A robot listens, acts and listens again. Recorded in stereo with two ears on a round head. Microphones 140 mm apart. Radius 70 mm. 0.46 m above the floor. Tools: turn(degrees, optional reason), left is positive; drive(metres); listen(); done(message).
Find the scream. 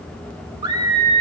turn(degrees=-25, reason="The scream: about 25° right or 155° right.")
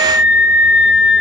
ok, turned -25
done("Found it: a scream, straight ahead.")